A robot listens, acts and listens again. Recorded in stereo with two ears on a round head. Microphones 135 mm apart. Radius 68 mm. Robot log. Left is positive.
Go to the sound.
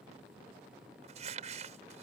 note: The crumpling: about 50° right or 130° right.
cmd yaw -50
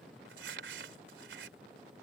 note: So it is at 80° right.
cmd yaw -80
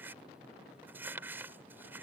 note: The crumpling is now 15° right.
cmd yaw -15
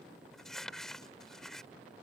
cmd fwd 1.0
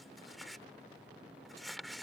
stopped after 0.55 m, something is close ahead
end: Something is in my way. I am facing the crumpling but have not reached it.